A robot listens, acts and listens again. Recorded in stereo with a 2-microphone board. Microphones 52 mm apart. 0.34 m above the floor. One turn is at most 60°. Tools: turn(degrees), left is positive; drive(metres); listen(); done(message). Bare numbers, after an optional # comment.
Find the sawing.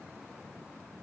listen()
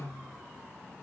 listen()
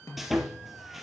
turn(-30)
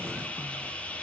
# So it is at 25° left.
turn(25)
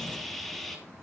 done("Facing the sawing, 2 to 4 m away.")